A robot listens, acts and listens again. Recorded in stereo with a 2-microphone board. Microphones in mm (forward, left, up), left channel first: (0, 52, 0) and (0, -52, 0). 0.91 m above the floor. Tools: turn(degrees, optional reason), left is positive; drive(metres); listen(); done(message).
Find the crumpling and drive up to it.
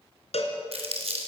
turn(degrees=-90)
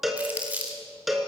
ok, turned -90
turn(degrees=-15, reason="So it is at 15° right.")
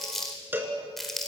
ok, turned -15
drive(metres=1.0)
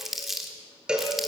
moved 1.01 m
drive(metres=1.0)
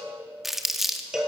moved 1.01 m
drive(metres=1.0)
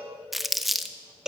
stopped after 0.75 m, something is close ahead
done("Arrived at the crumpling, straight ahead.")